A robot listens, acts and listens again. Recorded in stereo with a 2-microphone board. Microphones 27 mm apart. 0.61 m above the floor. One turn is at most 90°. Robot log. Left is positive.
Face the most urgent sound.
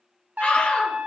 note: The scream: about 55° left or 125° left.
cmd yaw +55
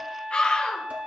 note: So it is at 60° left.
cmd yaw +60
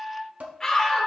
note: The scream is now 25° left.
cmd yaw +25
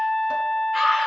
end: Facing the scream, 2 to 4 m away.